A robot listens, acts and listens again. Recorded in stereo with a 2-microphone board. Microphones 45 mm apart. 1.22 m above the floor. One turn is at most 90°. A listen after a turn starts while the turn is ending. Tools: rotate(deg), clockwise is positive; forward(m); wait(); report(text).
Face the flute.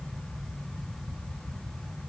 wait()
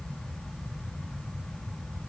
wait()
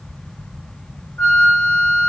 rotate(-60)
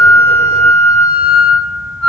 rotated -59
report("Facing the flute.")